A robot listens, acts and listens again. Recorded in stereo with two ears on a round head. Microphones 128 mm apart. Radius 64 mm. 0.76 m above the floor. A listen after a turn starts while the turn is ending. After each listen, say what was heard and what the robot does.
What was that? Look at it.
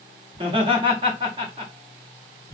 The laughter: about 35° right or 145° right. Turn 35° right.
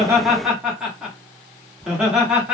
Found it: laughter, straight ahead, 1 to 2 m away.